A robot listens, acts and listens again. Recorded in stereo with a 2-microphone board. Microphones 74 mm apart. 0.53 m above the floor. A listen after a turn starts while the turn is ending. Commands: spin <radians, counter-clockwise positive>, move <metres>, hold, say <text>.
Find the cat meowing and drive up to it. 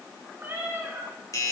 spin -0.52
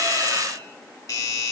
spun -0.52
hold
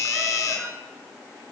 hold
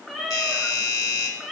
move 1.0
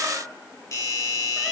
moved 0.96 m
hold
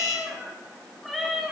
move 1.0
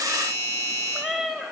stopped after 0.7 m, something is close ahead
say Arrived at the cat meowing, straight ahead.